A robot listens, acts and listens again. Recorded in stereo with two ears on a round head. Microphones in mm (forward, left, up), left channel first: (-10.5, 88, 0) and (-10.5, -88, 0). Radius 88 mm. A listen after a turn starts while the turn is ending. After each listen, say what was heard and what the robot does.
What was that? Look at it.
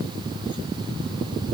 Keep listening.
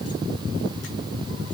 Keep listening.
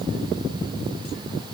I can't make out anything to turn to.